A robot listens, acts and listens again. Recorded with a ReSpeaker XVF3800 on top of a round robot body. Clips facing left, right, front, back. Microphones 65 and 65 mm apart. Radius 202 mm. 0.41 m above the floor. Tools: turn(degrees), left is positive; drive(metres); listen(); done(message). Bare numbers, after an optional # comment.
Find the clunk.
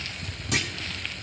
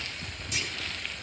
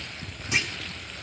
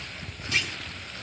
# The clunk: 70° left.
turn(70)
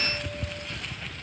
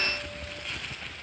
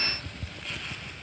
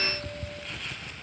done("I heard a clunk from this way, but can't make it out now.")